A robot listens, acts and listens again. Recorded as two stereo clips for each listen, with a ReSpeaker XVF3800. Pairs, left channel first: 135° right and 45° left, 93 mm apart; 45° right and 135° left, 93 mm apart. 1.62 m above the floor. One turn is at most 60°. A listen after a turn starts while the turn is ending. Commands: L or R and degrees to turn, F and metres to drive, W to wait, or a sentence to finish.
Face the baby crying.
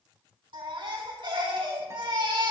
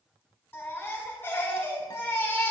L25
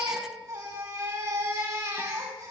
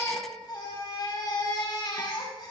Found it: a baby crying, straight ahead, over 4 m away.